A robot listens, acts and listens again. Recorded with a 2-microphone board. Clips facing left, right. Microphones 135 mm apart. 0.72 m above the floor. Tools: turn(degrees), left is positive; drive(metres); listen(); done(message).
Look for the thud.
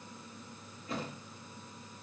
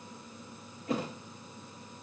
turn(degrees=-70)
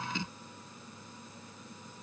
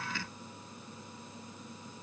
listen()
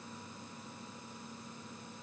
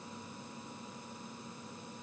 done("I heard a thud, but can't make it out now. It was about straight ahead or 40° right.")